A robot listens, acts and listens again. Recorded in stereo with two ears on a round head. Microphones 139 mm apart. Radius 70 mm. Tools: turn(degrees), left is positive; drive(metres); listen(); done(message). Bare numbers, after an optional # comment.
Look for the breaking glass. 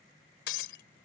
turn(90)
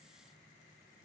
done("Facing where the breaking glass came from. I can't hear it now.")